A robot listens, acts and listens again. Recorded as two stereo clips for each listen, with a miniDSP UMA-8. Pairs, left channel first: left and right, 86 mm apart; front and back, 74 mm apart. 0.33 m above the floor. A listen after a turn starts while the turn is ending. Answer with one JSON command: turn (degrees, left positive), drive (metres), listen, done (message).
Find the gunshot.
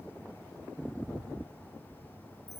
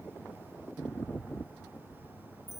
{"listen": true}
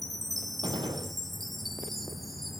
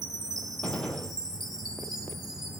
{"turn": -75}
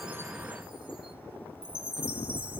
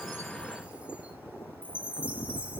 {"done": "I heard a gunshot from this way, but can't make it out now."}